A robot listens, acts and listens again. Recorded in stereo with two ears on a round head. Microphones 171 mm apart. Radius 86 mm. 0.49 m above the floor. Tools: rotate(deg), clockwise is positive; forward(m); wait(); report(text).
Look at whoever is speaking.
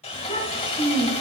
rotate(-30)
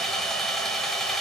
wait()
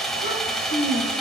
rotate(-120)
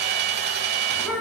report("Found it: a child speaking, straight ahead, 2 to 4 m away.")